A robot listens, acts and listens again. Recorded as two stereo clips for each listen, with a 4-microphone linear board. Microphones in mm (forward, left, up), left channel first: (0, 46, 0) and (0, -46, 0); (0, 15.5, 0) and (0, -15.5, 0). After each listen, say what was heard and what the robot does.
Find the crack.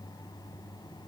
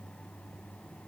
Keep listening.
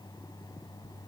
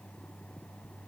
Keep listening.
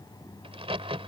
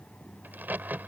Turn 90° right.
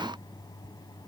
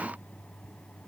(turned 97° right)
Facing where the crack came from. I can't hear it now.